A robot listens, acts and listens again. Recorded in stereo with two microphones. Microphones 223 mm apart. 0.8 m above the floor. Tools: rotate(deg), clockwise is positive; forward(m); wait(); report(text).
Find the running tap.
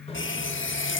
rotate(-60)
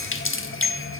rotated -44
rotate(-70)
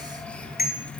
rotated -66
report("Facing the running tap, 1 to 2 m away.")